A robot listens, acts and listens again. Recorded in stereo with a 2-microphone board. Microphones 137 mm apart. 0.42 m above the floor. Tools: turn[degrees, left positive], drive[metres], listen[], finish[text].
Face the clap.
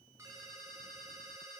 Action: listen[]
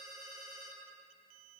Action: listen[]
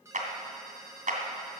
Thought: The clap: about 65° right or 115° right.
Action: turn[-65]
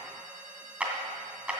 Thought: So it is at 10° right.
Action: turn[-10]
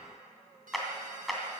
Action: finish[Facing the clap.]